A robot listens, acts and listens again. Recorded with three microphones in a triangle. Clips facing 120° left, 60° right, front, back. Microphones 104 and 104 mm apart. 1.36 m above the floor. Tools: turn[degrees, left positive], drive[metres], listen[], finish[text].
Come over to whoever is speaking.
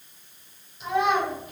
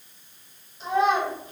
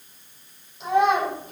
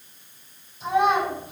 Action: drive[1.0]
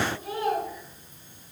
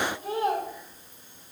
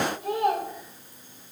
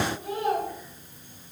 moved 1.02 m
Action: drive[1.0]
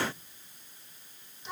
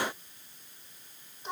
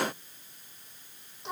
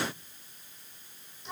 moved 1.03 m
Thought: The child speaking is now 10° right.
Action: turn[-10]
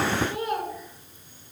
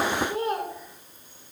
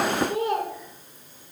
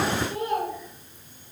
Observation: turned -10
Action: drive[1.0]
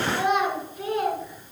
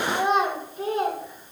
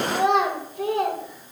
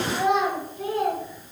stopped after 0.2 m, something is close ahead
Action: finish[Arrived at the child speaking, straight ahead.]